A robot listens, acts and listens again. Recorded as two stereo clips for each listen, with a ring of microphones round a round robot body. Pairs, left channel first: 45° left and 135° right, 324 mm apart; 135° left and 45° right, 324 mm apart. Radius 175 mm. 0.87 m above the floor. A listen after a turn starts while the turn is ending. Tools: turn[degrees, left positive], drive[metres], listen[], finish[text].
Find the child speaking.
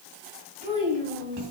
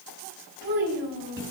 Thought: The child speaking: 65° right.
Action: turn[-65]
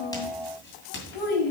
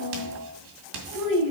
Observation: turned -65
Thought: The child speaking is now 30° left.
Action: turn[30]
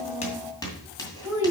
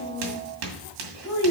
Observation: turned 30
Action: finish[Found it: a child speaking, straight ahead.]